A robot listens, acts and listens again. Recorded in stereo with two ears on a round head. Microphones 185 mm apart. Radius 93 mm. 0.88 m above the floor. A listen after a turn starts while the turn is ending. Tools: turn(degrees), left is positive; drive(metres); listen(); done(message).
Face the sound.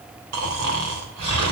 turn(degrees=-90)
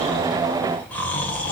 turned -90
done("Found it: snoring, straight ahead.")